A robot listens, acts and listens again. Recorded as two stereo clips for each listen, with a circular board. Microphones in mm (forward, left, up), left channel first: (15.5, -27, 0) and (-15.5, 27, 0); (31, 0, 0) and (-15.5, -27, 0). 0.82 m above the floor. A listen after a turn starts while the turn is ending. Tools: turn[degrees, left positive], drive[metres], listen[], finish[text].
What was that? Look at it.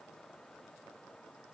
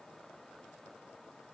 Action: listen[]
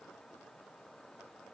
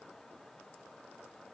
Action: listen[]
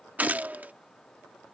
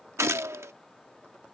Thought: The gunshot: straight behind.
Action: turn[180]
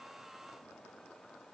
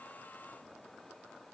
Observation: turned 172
Thought: Nothing new. It was at 10° left.
Action: turn[10]
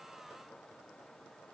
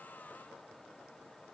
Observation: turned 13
Action: finish[Facing where the gunshot came from. I can't hear it now.]